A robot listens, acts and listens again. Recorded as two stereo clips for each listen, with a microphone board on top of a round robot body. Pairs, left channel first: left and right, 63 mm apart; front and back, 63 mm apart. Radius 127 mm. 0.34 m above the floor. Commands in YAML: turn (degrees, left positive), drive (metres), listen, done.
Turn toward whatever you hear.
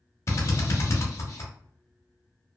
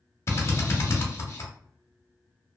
turn: 45
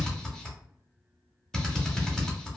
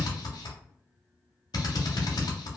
turn: 10
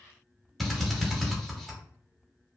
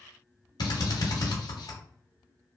done: "Facing the drill."